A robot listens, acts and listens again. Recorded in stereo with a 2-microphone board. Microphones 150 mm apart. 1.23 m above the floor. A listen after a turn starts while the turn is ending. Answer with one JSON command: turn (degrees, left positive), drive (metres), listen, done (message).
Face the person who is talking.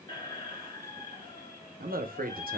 {"turn": -90}
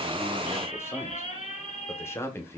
{"turn": 15}
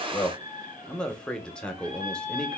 {"done": "Found it: a man speaking, straight ahead."}